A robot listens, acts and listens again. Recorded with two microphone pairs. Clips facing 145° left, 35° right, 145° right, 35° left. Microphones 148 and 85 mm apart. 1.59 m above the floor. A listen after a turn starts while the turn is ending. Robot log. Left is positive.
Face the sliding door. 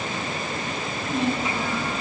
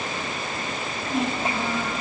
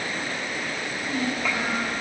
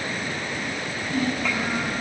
cmd idle
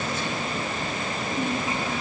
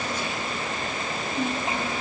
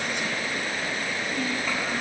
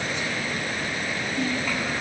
cmd idle
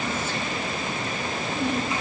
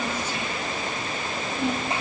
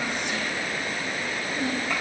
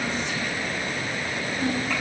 end: I can't make out a sliding door, only a child speaking.